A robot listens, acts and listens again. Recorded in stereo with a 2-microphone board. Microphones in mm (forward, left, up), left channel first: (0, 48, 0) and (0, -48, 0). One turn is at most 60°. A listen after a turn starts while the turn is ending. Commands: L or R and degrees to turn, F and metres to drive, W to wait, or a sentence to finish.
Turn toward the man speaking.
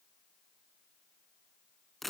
W
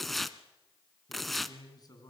L45
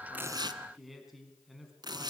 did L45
Found it: a man speaking, straight ahead, over 4 m away.